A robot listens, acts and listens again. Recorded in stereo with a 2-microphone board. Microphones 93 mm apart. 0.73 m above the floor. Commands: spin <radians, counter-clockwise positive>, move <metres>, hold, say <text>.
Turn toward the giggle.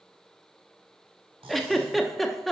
spin 0.52
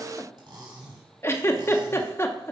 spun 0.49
spin 2.62
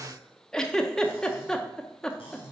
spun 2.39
spin 0.17
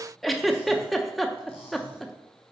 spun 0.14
say Found it: a giggle, straight ahead.